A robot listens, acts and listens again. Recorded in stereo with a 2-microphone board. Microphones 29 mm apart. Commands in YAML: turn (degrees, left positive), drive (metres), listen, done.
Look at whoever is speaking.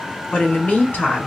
turn: 60
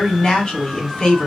turn: 35
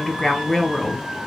turn: 15
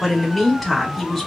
done: "Found it: a woman speaking, straight ahead, 1 to 2 m away."